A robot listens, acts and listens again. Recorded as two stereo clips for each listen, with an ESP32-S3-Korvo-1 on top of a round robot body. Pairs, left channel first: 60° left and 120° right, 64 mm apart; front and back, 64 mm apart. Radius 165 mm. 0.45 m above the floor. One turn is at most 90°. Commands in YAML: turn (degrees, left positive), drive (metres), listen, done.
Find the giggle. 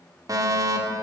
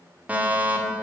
listen: true
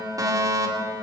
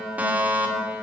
listen: true
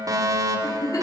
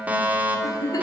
turn: 30
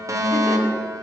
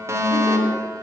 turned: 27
listen: true
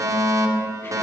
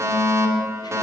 listen: true
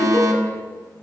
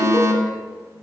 done: "Facing where the giggle came from. I can't hear it now."